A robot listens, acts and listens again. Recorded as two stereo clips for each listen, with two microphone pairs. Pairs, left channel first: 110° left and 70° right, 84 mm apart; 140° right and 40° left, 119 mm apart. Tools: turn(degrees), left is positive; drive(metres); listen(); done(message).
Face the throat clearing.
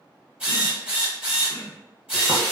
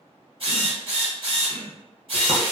turn(degrees=85)
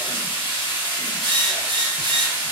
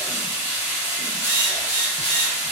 listen()
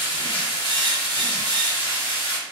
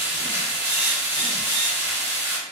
listen()
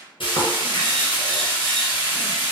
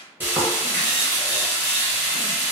done("Facing where the throat clearing came from. I can't hear it now.")